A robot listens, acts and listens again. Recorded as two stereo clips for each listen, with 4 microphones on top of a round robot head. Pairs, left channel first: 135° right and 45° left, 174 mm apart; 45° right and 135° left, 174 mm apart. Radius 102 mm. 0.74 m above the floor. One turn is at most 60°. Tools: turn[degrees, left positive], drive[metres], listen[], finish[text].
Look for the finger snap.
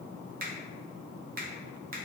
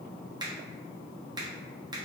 Thought: The finger snap: 70° left.
Action: turn[60]
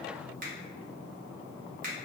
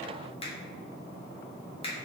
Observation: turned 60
Thought: The finger snap is now 10° left.
Action: turn[10]
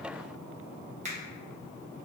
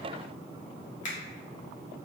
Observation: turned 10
Action: finish[Found it: a finger snap, straight ahead.]